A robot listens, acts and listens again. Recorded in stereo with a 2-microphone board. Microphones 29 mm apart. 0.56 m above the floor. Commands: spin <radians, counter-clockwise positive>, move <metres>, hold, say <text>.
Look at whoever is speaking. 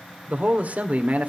spin -0.96
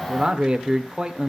spin -0.79
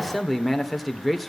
say Found it: a man speaking, straight ahead, 1 to 2 m away.